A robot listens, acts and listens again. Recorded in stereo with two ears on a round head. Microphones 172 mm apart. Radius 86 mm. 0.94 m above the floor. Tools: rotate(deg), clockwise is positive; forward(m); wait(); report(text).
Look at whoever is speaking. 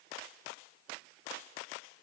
wait()
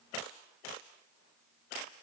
wait()
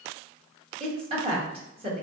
rotate(30)
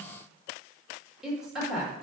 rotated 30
report("Found it: a woman speaking, straight ahead.")